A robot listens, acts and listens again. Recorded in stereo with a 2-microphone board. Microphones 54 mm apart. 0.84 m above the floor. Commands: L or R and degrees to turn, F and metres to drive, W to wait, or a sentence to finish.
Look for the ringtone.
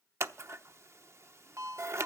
R70
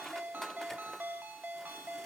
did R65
R35
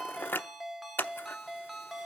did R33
Found it: a ringtone, straight ahead, 1 to 2 m away.